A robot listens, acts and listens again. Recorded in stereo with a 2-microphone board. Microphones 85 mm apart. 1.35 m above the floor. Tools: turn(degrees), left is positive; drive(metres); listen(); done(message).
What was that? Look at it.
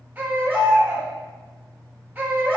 turn(degrees=-25)
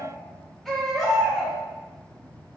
done("Facing the baby crying, 1 to 2 m away.")